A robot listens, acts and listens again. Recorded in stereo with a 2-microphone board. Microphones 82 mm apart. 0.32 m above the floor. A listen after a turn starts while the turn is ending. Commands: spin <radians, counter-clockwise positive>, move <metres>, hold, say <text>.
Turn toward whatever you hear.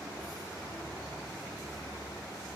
hold
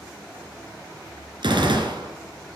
spin -1.31
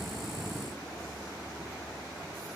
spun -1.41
hold
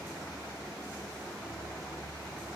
say I heard a gunshot, but can't make it out now. It was about 10° left or 25° right.